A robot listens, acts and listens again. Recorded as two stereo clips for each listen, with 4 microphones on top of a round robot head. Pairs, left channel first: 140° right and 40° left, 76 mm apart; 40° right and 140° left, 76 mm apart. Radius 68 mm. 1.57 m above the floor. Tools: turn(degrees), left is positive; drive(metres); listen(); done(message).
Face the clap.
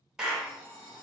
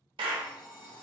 turn(degrees=125)
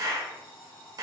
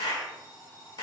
done("Facing the clap, under 1 m away.")